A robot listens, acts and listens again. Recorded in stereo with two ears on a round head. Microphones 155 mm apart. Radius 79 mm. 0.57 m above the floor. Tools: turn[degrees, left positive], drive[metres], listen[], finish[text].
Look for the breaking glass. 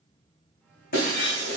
Thought: The breaking glass: about 65° left or 115° left.
Action: turn[65]
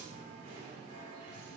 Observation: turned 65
Action: listen[]
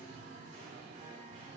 Action: finish[I heard breaking glass, but can't make it out now. It was about straight ahead or 50° left.]